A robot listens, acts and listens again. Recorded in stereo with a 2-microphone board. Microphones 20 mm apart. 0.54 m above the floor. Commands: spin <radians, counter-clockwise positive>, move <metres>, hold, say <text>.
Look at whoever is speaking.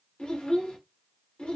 spin 0.87
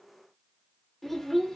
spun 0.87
spin 0.17
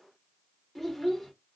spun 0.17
say Facing the child speaking.